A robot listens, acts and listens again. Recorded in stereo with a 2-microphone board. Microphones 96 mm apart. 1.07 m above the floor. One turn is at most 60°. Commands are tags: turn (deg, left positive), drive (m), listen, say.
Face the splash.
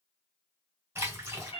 <turn deg="-25"/>
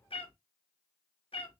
<listen/>
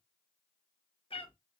<say>I heard a splash, but can't make it out now. It was about straight ahead or 130° right.</say>